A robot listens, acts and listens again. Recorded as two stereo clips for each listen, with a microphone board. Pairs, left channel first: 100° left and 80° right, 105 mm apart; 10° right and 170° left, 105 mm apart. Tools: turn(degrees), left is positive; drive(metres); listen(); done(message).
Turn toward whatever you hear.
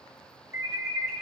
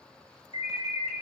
turn(degrees=-25)
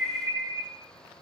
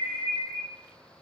turn(degrees=-10)
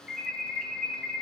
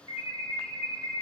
done("Found it: an alarm, straight ahead.")